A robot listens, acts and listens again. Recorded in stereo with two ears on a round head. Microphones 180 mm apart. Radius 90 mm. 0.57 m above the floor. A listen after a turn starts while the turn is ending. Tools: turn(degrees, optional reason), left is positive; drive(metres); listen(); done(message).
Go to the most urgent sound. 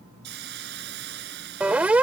turn(degrees=-30)
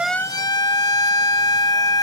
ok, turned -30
turn(degrees=25, reason="So it is at 25° left.")
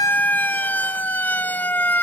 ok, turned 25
turn(degrees=10, reason="The siren is now 10° left.")
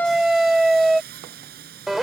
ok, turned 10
drive(metres=1.0)
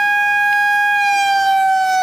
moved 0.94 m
drive(metres=1.0)
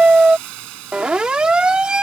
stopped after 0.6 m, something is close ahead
done("Arrived at the siren, straight ahead.")